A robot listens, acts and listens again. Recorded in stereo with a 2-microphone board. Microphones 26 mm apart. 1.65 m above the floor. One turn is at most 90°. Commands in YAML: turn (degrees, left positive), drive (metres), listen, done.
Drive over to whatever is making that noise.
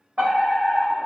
turn: -70
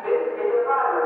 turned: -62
turn: -40
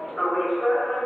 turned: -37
drive: 1.0
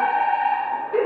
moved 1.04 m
turn: -10
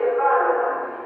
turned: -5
drive: 1.0
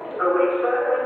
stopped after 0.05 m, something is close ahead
done: "Arrived at the fire alarm, straight ahead."